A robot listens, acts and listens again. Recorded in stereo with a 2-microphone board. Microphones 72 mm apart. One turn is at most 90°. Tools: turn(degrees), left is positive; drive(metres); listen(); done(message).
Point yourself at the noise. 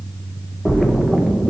turn(degrees=30)
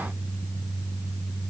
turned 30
listen()
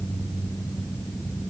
done("I heard a splash, but can't make it out now. It was about 30° right or 150° left.")